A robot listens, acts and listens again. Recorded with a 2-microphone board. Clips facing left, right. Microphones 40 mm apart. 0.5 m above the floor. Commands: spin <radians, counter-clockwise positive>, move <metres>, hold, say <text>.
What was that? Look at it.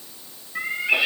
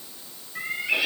spin 0.70
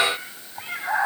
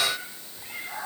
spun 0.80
spin 1.75
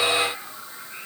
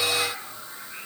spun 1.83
say Facing the cat meowing, over 4 m away.